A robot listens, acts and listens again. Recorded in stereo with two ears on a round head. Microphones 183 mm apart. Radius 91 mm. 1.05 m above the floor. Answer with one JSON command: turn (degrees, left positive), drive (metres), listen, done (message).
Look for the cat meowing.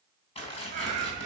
{"turn": -35}
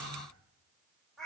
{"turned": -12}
{"done": "Facing the cat meowing, 1 to 2 m away."}